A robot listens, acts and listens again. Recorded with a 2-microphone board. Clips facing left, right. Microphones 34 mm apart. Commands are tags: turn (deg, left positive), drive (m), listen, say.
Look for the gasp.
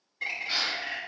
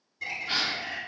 <turn deg="-65"/>
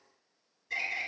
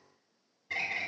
<listen/>
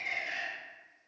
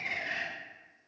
<say>I heard a gasp, but can't make it out now. It was about straight ahead or 50° right.</say>